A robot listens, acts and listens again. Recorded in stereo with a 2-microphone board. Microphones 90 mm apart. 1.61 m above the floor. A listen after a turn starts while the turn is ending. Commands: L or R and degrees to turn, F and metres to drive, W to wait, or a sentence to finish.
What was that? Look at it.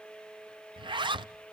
R60
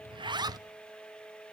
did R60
R50
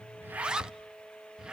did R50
R10
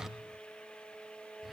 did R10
W
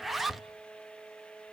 Found it: a zipper, straight ahead.